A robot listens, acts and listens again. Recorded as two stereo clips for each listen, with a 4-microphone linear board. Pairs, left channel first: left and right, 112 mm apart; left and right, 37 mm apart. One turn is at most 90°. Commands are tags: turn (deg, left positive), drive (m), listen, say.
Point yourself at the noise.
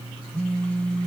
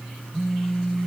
<turn deg="30"/>
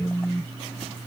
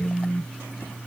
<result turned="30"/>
<turn deg="90"/>
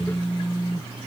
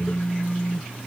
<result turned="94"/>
<turn deg="45"/>
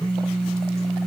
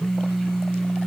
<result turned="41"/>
<say>Facing the phone buzzing.</say>